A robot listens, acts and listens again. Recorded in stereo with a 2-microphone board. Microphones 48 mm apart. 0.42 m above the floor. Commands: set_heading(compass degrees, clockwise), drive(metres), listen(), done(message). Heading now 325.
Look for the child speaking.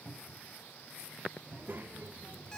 set_heading(10)
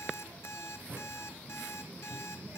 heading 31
set_heading(91)
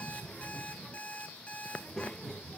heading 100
set_heading(90)
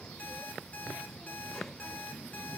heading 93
done("Facing the child speaking, under 1 m away.")